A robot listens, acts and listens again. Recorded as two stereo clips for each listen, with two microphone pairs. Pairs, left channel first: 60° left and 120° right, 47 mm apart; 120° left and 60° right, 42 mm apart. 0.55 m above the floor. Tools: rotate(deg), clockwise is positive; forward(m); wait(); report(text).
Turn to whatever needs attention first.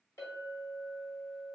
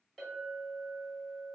wait()
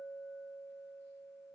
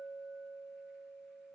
wait()
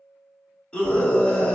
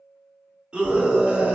report("Facing the scream, 1 to 2 m away.")